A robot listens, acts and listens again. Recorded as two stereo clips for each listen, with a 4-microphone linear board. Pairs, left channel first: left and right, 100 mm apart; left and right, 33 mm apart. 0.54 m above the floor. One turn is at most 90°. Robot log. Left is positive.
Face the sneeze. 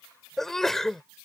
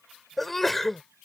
cmd yaw +30
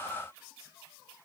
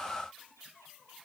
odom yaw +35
cmd idle
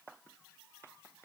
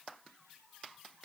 end: I heard a sneeze, but can't make it out now. It was about 30° right or 140° left.